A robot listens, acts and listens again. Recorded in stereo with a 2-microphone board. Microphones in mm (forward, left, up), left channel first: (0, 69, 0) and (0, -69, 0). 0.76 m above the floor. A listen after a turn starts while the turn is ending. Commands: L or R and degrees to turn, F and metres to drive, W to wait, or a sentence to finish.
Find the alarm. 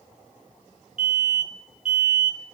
R65
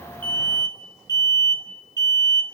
R25
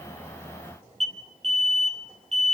Found it: an alarm, straight ahead, 2 to 4 m away.